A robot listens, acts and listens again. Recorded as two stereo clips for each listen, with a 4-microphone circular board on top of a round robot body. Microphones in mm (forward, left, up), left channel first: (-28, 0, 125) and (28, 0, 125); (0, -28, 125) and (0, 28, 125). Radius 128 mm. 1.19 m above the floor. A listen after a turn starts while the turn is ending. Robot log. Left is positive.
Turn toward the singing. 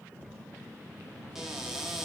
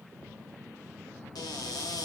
cmd idle
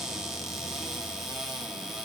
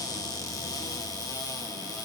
cmd idle
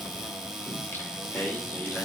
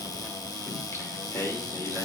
note: The singing: 125° right.
cmd yaw -125
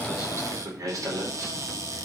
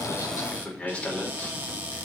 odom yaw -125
note: The singing is now 15° right.
cmd yaw -15
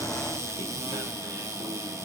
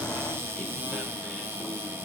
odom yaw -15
cmd idle
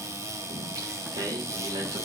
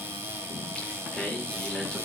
end: Facing the singing.